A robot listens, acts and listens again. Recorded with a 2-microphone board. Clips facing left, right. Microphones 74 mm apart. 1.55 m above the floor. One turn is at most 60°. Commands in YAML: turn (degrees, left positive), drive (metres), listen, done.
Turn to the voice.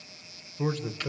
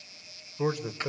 turn: -30
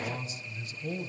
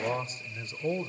turn: -60
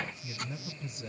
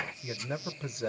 turn: -60
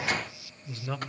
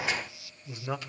turn: -20
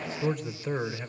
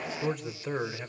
done: "Facing the man speaking."